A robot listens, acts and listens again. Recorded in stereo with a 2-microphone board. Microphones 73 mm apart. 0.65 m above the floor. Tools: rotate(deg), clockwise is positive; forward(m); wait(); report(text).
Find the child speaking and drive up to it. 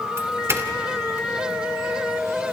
wait()
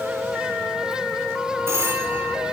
wait()
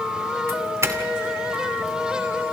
report("I can't make out a child speaking to turn to.")